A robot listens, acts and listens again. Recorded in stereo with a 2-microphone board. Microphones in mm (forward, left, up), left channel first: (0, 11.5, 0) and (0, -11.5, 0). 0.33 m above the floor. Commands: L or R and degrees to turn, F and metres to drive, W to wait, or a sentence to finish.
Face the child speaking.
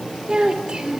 R50
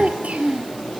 R75
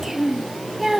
Found it: a child speaking, straight ahead.